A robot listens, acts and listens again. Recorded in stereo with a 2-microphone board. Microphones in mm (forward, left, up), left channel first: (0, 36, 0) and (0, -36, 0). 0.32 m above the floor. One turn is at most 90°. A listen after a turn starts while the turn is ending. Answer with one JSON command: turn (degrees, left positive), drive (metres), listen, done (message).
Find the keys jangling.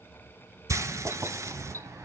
{"turn": -45}
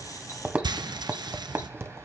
{"turn": -35}
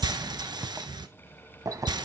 {"turn": -55}
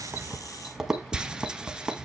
{"done": "Found it: keys jangling, straight ahead, 1 to 2 m away."}